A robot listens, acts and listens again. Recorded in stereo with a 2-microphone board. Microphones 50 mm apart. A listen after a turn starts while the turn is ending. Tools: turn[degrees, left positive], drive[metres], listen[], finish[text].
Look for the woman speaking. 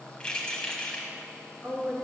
Thought: The woman speaking: about 65° right or 115° right.
Action: turn[-65]
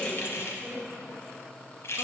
Thought: So it is at 35° right.
Action: turn[-35]
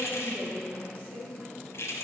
Thought: The woman speaking is now 30° right.
Action: turn[-30]
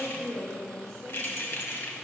Action: finish[Facing the woman speaking.]